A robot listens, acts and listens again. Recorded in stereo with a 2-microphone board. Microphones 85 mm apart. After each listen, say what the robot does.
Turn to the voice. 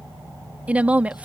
Turn 15° right.
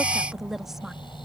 Facing the woman speaking.